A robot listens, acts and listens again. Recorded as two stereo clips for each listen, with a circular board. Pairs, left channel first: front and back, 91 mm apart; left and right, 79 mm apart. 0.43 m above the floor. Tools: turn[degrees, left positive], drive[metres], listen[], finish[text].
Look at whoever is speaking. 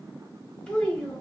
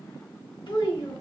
Thought: The child speaking: 80° left.
Action: turn[80]
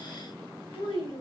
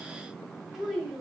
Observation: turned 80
Action: finish[Facing the child speaking.]